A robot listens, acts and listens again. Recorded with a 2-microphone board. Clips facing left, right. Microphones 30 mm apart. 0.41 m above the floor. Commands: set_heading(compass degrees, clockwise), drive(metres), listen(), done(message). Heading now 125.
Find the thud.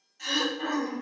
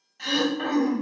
listen()
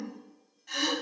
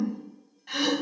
listen()
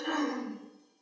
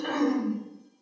done("I can't make out a thud, only throat clearing.")